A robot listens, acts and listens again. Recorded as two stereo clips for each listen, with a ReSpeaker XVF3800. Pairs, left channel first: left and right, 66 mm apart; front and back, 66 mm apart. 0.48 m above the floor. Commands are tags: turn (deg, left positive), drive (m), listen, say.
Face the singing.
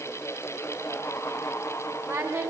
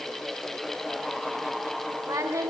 <turn deg="-140"/>
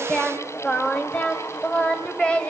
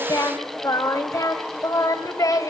<turn deg="15"/>
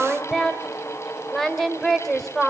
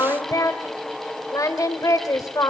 <say>Found it: singing, straight ahead, 2 to 4 m away.</say>